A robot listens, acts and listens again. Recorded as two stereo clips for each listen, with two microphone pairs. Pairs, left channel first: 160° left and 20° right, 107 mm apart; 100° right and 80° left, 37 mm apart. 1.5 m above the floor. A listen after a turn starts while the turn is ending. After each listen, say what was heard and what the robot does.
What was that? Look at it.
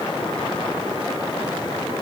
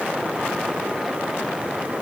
Keep listening.
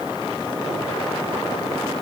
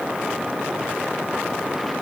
Keep listening.
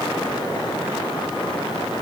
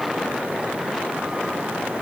I can't make out anything to turn to.